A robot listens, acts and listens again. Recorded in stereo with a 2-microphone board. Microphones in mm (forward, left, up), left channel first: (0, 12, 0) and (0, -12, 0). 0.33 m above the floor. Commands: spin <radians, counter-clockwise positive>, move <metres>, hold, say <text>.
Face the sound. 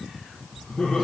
spin 0.79
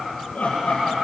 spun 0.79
spin 1.48
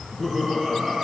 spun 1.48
say Facing the laughter.